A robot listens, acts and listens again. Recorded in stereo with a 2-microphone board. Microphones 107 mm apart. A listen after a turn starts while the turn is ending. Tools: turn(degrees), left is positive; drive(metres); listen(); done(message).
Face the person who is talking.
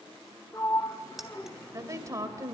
turn(degrees=-30)
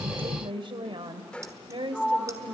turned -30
turn(degrees=-115)
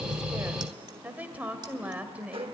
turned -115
turn(degrees=-15)
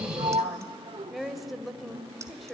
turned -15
done("Found it: a woman speaking, straight ahead.")